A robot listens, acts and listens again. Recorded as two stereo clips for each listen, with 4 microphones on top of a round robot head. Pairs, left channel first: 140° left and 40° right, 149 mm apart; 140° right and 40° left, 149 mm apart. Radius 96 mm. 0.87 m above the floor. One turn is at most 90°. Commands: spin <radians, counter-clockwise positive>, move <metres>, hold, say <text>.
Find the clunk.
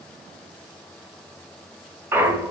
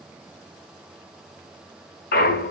spin -1.57
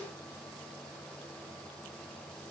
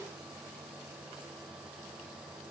spin -0.44
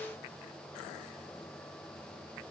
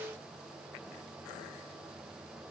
say I heard a clunk from this way, but can't make it out now.